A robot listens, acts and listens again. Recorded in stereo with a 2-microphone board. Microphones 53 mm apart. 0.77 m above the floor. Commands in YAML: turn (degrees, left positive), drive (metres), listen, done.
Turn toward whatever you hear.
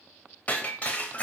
turn: 35
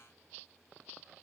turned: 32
listen: true
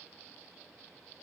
done: "I heard breaking glass, but can't make it out now. It was about straight ahead or 115° left."